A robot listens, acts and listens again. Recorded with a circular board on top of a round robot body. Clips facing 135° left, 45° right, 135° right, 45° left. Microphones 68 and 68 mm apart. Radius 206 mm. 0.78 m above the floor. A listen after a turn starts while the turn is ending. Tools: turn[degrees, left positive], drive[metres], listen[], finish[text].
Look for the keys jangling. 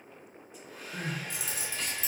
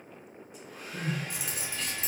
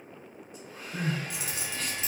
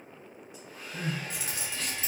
Thought: The keys jangling: 10° right.
Action: turn[-10]
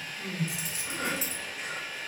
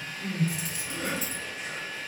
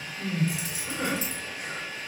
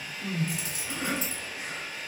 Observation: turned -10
Action: finish[Facing the keys jangling.]